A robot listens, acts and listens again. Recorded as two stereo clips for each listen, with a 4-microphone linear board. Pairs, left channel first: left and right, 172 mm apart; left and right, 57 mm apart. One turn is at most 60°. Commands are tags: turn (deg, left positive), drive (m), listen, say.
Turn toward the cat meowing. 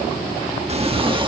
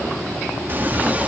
<turn deg="-30"/>
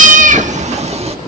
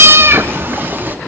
<turn deg="-35"/>
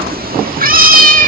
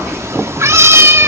<turn deg="-60"/>
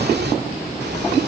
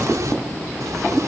<turn deg="-60"/>
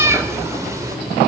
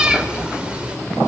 <turn deg="-20"/>
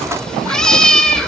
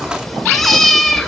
<say>Found it: a cat meowing, straight ahead, 2 to 4 m away.</say>